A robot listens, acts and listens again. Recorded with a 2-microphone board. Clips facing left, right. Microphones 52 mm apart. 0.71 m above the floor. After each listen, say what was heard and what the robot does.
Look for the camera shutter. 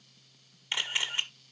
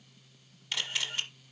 The camera shutter: about 25° left or 155° left. Turn 25° left.
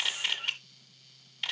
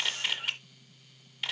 Found it: a camera shutter, straight ahead, 1 to 2 m away.